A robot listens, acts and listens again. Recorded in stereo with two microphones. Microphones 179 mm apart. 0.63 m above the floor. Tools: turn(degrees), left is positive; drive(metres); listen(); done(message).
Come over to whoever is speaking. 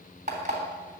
listen()
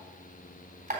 listen()
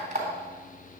done("I can't make out anyone speaking, only an alarm clock.")